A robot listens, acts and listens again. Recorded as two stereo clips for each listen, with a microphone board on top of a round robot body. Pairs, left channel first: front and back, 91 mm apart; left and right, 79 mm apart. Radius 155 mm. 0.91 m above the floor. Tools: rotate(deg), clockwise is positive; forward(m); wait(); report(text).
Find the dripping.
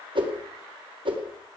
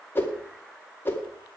wait()
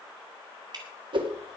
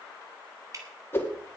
rotate(140)
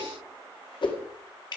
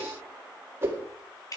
rotate(-40)
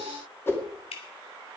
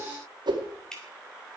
report("Facing the dripping, 2 to 4 m away.")